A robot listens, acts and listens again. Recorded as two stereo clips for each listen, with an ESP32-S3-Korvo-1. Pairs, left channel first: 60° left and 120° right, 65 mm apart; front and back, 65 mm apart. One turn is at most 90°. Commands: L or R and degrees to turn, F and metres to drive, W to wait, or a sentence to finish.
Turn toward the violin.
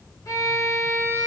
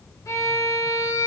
L30
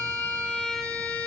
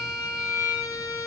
R10
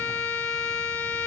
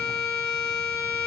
Facing the violin, 2 to 4 m away.